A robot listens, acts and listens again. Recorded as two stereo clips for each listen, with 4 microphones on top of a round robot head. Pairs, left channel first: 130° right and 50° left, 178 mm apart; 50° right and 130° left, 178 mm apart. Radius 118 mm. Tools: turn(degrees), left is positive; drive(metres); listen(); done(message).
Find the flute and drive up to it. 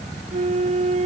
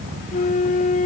drive(metres=1.0)
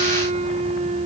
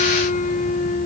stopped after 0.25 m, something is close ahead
done("Blocked. The flute is further on, straight ahead.")